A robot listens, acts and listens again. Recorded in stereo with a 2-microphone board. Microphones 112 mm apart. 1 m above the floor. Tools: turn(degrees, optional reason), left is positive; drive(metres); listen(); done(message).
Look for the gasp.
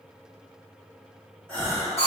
turn(degrees=30)
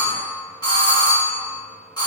listen()
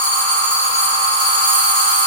done("I heard a gasp, but can't make it out now. It was about 20° right or 140° left.")